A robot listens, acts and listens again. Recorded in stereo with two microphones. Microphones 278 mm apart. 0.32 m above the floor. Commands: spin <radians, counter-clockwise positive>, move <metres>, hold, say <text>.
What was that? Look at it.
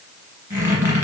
spin -0.52
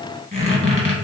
spin 0.35
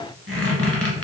say Facing the squeak, 1 to 2 m away.